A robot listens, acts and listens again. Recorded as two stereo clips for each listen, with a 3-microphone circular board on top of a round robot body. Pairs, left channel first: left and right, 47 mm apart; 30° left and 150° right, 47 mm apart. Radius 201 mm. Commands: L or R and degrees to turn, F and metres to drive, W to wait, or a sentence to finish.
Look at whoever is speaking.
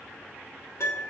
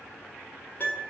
W
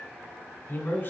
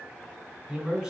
L125
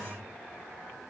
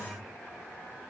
L25
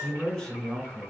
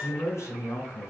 Found it: a man speaking, straight ahead.